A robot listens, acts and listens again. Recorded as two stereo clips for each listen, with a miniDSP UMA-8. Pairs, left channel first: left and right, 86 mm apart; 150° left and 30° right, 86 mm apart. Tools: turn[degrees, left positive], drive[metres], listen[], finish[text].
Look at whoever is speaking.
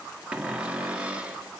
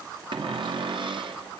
Action: listen[]
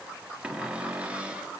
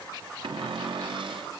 Action: listen[]
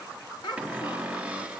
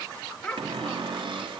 Thought: The child speaking: 70° left.
Action: turn[70]
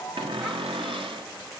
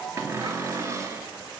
Action: listen[]
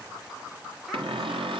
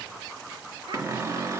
Action: listen[]
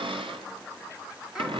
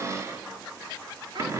Action: finish[I heard a child speaking from this way, but can't make it out now.]